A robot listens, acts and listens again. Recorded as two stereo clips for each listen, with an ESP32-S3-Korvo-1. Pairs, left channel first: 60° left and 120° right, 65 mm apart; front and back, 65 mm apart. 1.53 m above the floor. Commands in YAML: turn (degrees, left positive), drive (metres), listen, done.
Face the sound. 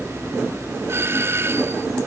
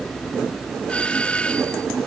turn: -70
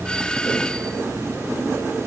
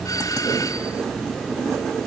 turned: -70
turn: -15
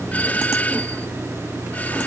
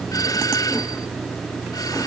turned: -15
done: "Facing the doorbell."